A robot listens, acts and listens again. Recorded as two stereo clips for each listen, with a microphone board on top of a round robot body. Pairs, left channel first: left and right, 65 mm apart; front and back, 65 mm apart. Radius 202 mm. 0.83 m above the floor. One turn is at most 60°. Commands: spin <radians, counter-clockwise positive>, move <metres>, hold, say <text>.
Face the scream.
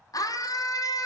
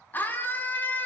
spin 1.05
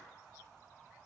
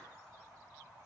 hold
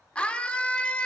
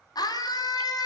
spin 0.26
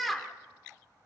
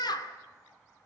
say Facing the scream.